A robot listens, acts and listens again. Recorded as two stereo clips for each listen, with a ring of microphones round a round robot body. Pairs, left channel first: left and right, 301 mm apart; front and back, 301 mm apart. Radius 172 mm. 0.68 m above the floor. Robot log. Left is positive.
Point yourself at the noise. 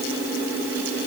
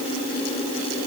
cmd idle
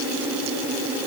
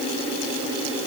cmd idle
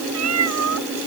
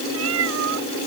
note: The cat meowing: 125° right.
cmd yaw -125
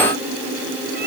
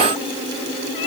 cmd idle
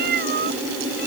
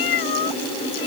note: The cat meowing is now 25° right.
cmd yaw -25
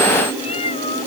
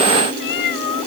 note: The cat meowing is now 15° left.
cmd yaw +15
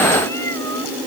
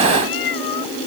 end: Facing the cat meowing.